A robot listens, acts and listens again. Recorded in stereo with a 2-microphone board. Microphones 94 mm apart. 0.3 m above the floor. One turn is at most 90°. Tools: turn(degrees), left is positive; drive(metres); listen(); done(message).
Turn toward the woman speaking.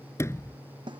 listen()
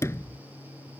listen()
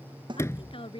turn(degrees=90)
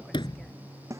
listen()
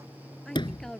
done("Facing the woman speaking.")